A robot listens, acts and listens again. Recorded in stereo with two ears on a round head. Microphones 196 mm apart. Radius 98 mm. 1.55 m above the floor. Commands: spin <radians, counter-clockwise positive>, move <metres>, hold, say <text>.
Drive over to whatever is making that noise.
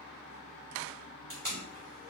spin 0.52
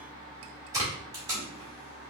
spin -0.35
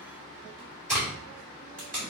move 1.0
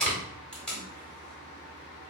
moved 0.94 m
move 1.0
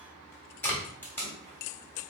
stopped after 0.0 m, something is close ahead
spin 0.17
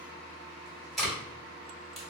say Arrived at the tape being pulled, straight ahead.